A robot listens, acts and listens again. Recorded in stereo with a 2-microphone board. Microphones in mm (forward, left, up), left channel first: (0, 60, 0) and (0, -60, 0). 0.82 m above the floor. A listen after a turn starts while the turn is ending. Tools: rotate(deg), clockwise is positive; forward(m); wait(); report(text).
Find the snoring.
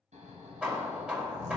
rotate(90)
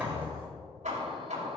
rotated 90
wait()
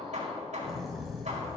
report("Found it: snoring, straight ahead.")